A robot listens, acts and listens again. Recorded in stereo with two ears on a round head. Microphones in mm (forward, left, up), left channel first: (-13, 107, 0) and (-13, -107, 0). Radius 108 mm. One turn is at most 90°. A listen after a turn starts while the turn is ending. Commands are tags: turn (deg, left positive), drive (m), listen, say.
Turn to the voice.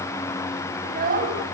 <turn deg="-35"/>
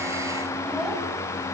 <listen/>
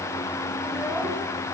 <listen/>
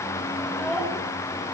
<say>Found it: a child speaking, straight ahead.</say>